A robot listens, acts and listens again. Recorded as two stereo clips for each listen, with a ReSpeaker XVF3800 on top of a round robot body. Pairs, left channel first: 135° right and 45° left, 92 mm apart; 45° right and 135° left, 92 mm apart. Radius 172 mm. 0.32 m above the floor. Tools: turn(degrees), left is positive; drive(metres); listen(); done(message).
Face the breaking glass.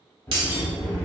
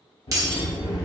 turn(degrees=80)
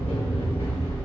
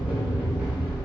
done("I heard breaking glass from this way, but can't make it out now.")